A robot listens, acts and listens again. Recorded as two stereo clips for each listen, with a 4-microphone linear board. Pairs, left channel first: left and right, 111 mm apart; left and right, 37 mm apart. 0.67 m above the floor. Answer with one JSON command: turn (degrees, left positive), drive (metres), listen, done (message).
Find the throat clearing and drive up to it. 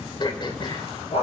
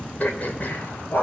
{"turn": 45}
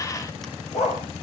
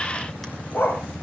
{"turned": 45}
{"listen": true}
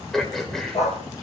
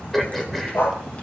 {"drive": 1.0}
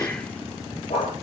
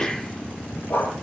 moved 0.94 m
{"turn": 10}
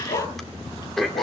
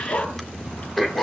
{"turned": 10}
{"drive": 1.0}
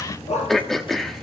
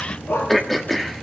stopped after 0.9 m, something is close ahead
{"done": "Arrived at the throat clearing, straight ahead."}